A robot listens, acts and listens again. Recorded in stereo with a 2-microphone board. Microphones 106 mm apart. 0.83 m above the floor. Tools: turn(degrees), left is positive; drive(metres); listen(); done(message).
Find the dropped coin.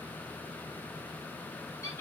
listen()
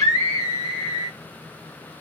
listen()
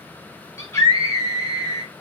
done("I can't make out a dropped coin, only a scream.")